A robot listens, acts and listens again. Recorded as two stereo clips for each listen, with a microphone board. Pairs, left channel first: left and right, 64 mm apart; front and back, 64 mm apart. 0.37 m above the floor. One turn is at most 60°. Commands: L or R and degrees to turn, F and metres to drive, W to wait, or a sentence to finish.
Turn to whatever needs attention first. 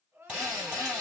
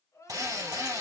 R40
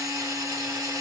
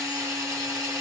W
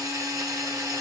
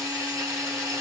W
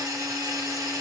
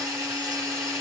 Facing where the crying came from. I can't hear it now.